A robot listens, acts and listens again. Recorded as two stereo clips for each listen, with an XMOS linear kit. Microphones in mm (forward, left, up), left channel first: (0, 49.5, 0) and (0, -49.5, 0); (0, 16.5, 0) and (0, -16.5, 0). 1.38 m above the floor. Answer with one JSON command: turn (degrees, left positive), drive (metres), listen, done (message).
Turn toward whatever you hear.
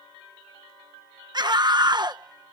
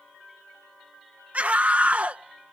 {"turn": -45}
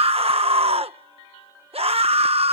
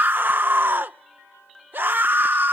{"turn": -90}
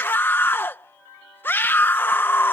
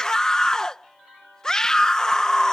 {"turn": 20}
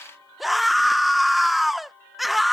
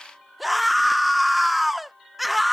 {"done": "Facing the scream."}